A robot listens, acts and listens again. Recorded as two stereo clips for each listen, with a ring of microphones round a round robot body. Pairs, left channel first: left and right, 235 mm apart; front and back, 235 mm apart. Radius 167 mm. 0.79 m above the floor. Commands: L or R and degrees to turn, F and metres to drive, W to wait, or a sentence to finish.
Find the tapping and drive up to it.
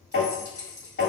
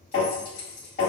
L55
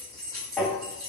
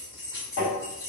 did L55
F1.0
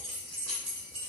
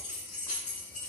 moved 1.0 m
W
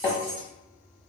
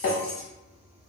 L20
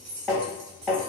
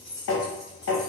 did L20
F1.0
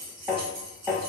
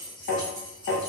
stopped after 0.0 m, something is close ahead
Arrived at the tapping, straight ahead.